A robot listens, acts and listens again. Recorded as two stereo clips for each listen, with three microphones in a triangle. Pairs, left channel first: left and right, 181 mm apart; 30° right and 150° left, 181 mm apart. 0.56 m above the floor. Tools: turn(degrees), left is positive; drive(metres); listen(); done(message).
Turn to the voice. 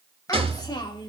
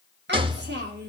turn(degrees=155)
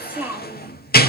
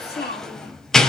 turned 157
turn(degrees=-10)
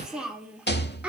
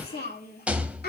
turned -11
turn(degrees=-10)
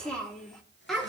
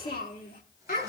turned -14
done("Found it: a child speaking, straight ahead.")